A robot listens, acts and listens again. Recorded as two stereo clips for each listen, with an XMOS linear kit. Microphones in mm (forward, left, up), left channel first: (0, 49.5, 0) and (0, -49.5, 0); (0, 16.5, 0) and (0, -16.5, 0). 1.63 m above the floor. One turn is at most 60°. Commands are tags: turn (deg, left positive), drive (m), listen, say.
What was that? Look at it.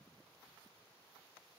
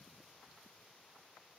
<listen/>
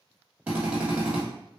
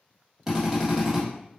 <turn deg="-30"/>
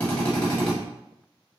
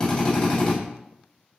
<turn deg="20"/>
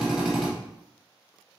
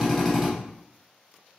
<say>Facing the drill, 1 to 2 m away.</say>